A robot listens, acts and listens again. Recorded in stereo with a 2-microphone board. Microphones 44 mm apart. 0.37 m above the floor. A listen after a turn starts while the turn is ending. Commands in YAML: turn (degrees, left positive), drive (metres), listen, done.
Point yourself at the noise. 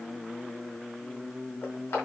turn: 60
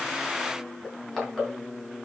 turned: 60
done: "Facing the crushing, over 4 m away."